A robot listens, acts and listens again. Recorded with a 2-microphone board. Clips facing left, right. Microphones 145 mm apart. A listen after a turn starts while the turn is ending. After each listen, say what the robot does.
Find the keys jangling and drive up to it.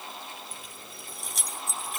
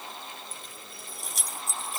Turn 30° left.
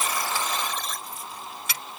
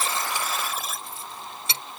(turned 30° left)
Turn 30° right.
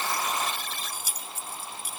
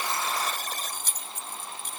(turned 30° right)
Turn 10° left.
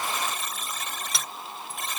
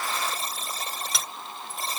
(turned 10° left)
Drive 1.0 m forward.
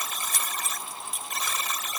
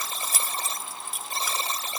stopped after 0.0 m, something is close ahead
Blocked. The keys jangling is further on, straight ahead.